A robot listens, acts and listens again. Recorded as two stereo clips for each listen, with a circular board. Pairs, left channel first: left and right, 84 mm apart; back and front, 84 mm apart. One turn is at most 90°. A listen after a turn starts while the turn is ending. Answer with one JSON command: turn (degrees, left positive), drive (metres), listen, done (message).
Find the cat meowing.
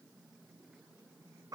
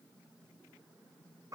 {"listen": true}
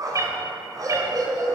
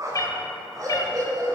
{"turn": -90}
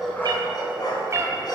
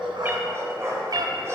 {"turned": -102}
{"turn": -35}
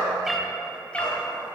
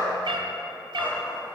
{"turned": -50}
{"turn": 15}
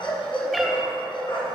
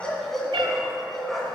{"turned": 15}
{"listen": true}
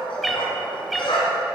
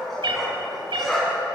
{"done": "Facing the cat meowing, under 1 m away."}